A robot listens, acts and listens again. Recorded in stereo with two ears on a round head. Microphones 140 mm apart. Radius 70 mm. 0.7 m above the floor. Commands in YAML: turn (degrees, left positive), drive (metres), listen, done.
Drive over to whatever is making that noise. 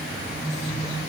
listen: true
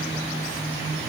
listen: true
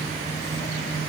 done: "I can't make out anything."